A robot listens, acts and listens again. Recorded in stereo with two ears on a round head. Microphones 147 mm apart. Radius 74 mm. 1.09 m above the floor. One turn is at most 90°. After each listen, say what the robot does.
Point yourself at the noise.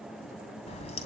Turn 40° left.
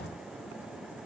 Keep listening.
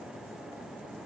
I heard a crack, but can't make it out now. It was about straight ahead or 100° left.